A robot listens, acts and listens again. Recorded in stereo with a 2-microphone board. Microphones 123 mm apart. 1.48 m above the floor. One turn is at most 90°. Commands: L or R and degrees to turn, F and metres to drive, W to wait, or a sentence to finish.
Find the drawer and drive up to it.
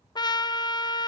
W
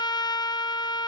W
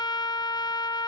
I can't make out a drawer, only a trumpet.